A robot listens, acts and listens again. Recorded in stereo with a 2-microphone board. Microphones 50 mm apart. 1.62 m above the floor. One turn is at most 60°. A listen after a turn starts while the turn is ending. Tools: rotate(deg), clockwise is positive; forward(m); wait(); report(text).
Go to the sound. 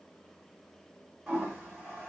rotate(30)
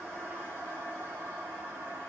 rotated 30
rotate(60)
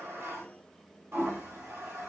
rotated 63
rotate(60)
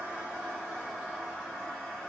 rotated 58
forward(1.0)
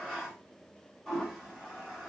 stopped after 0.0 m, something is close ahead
report("Something is in my way. I am facing the toilet flushing but have not reached it.")